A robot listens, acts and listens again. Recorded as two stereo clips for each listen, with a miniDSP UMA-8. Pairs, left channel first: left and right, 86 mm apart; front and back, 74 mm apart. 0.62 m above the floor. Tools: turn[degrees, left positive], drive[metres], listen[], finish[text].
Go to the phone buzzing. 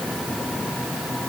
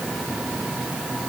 Action: listen[]
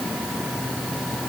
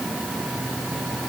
Action: listen[]
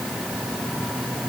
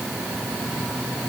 Action: finish[I can't make out a phone buzzing.]